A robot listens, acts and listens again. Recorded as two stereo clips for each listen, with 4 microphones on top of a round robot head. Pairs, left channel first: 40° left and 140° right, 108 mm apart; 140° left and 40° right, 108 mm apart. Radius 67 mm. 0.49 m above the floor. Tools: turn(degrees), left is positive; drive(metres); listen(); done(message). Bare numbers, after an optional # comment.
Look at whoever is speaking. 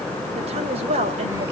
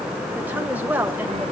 # The woman speaking: 115° right.
turn(-115)
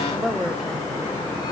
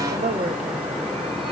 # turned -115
# The woman speaking is now 50° right.
turn(-50)
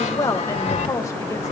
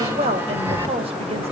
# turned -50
# The woman speaking is now 15° right.
turn(-15)
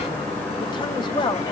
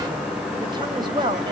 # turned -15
done("Facing the woman speaking.")